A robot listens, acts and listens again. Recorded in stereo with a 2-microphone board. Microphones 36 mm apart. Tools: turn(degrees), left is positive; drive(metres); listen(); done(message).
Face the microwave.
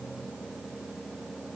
listen()
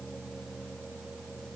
listen()
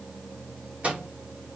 turn(degrees=-35)
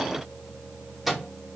done("Found it: a microwave, straight ahead, 1 to 2 m away.")